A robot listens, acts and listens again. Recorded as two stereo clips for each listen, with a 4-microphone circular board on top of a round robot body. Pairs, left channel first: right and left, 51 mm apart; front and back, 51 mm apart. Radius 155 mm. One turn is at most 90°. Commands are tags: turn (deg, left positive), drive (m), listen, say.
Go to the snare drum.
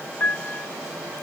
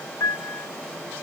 <listen/>
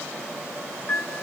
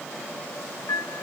<listen/>
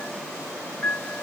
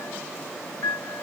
<say>I can't make out a snare drum, only a piano.</say>